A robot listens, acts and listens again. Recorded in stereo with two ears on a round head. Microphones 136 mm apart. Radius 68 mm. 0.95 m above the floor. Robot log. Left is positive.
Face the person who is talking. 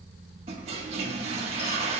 cmd idle
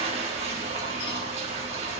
cmd idle
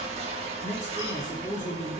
note: The man speaking: about 25° left or 155° left.
cmd yaw +25
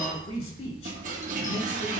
note: So it is at 130° left.
cmd yaw +130
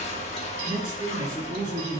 note: The man speaking is now 35° right.
cmd yaw -35
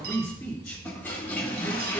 note: The man speaking is now 10° left.
cmd yaw +10
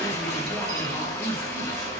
end: Facing the man speaking.